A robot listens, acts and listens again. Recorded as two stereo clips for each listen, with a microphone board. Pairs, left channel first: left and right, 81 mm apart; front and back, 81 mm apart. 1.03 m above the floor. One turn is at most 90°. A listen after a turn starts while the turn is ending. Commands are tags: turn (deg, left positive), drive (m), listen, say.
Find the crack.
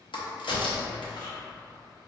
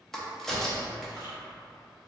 <turn deg="85"/>
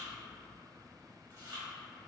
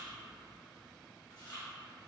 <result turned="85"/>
<say>I heard a crack from this way, but can't make it out now.</say>